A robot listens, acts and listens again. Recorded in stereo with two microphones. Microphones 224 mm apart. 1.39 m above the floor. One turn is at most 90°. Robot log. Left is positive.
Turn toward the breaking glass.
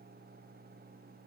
cmd idle
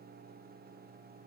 cmd idle
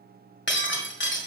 note: The breaking glass: about 50° left or 130° left.
cmd yaw +50
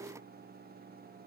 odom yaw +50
cmd idle
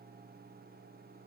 end: I heard breaking glass, but can't make it out now. It was about straight ahead or 80° left.